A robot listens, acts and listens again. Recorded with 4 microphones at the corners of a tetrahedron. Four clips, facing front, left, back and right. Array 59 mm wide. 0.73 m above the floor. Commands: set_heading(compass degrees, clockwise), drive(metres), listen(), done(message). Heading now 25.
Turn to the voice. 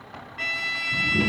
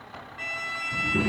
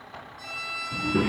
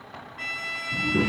set_heading(200)
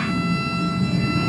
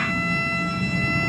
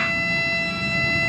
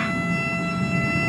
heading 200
done("Facing the child speaking.")